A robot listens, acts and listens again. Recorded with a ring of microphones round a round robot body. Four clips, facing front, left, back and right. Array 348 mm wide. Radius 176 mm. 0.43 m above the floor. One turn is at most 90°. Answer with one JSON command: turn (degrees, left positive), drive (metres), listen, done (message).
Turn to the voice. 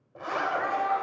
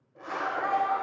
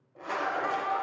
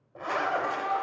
{"turn": 80}
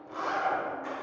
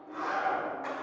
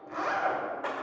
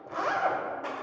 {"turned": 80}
{"listen": true}
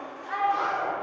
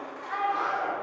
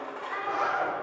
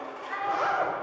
{"turn": 30}
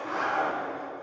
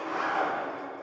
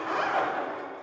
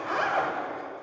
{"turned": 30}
{"listen": true}
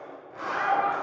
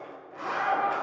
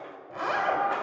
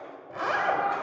{"listen": true}
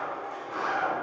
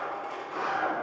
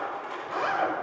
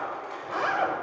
{"done": "I heard a child speaking from this way, but can't make it out now."}